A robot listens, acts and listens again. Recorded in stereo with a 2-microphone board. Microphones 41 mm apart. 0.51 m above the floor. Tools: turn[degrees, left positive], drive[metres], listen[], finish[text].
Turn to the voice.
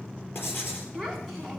Action: turn[30]
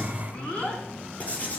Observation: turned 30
Thought: So it is at 150° left.
Action: turn[150]
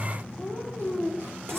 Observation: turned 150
Action: finish[Found it: a child speaking, straight ahead, 2 to 4 m away.]